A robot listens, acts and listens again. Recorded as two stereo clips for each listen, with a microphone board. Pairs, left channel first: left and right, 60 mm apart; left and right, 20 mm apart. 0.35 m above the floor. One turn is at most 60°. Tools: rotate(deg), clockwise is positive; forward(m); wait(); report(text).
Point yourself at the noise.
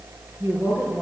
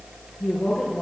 rotate(40)
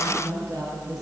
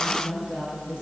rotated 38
rotate(60)
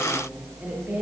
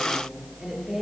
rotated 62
rotate(20)
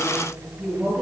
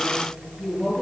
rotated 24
rotate(-10)
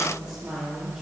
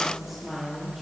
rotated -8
report("Found it: a woman speaking, straight ahead, over 4 m away.")